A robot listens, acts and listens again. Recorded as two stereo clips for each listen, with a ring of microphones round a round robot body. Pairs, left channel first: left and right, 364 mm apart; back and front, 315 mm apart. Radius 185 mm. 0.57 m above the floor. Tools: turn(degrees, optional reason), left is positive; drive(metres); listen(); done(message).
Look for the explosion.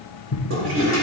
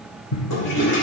turn(degrees=140, reason="The explosion: 140° left.")
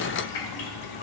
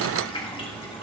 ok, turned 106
turn(degrees=35, reason="Nothing new. It was at 35° left.")
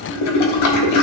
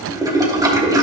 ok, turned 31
done("I heard an explosion from this way, but can't make it out now.")